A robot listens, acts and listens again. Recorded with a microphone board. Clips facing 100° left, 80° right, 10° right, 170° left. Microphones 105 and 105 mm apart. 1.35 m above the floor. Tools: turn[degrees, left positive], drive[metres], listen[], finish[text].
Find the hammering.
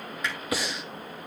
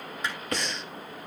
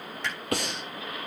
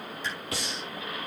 Thought: The hammering: 20° right.
Action: turn[-20]
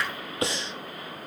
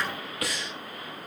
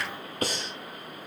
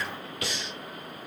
Action: listen[]
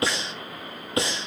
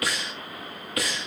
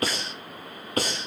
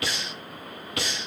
Action: listen[]
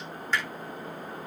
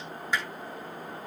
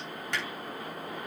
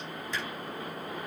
Action: finish[Found it: hammering, straight ahead.]